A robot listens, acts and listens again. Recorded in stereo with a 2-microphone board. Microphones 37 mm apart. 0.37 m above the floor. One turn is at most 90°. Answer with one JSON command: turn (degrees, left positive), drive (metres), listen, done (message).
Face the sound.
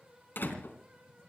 {"turn": 60}
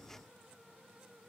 {"listen": true}
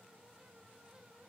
{"done": "I heard a door slam, but can't make it out now. It was about straight ahead or 60° left."}